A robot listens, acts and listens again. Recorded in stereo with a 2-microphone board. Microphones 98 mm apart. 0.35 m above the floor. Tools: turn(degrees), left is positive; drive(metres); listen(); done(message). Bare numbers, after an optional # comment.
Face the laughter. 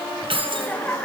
turn(30)
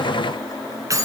listen()
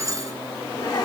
listen()
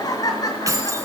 # So it is at 140° left.
turn(140)
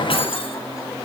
listen()
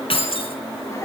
# The laughter is now 30° left.
turn(30)
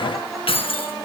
listen()
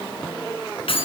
listen()
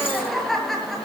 done("Facing the laughter, over 4 m away.")